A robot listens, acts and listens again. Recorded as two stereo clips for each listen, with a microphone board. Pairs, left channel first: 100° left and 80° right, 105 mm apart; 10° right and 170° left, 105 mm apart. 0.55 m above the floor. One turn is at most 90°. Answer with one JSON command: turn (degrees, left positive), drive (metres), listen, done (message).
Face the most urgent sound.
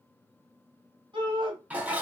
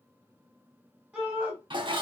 {"turn": -90}
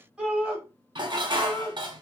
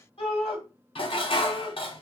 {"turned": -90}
{"done": "Found it: a shout, straight ahead, 1 to 2 m away."}